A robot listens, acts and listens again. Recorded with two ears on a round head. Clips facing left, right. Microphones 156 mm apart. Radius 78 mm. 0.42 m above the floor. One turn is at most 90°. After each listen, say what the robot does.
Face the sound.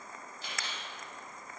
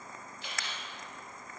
Turn 35° left.
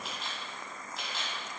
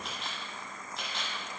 Found it: a camera shutter, straight ahead, 1 to 2 m away.